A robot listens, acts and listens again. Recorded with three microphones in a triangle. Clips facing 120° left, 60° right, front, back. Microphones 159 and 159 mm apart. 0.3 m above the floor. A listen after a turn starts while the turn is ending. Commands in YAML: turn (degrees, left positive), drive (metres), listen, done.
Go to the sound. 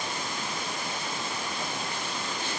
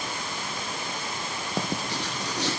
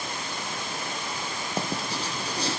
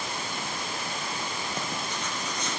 turn: -60
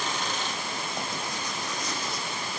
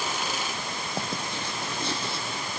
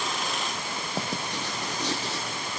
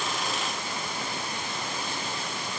drive: 1.0
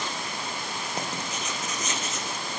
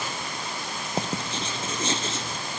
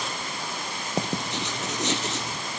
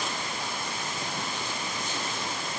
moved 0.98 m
drive: 1.0
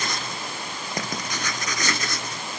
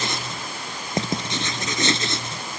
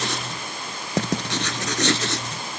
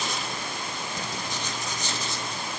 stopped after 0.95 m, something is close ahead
done: "I am next to the writing."